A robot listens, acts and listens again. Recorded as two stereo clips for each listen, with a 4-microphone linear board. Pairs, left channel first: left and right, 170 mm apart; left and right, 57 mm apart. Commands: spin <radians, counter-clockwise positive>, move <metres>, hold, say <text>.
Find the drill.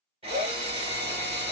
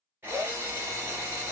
spin -0.61
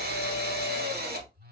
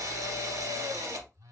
spin -1.92
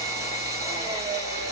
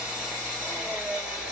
spin -0.35
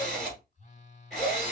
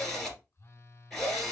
say Found it: a drill, straight ahead, 2 to 4 m away.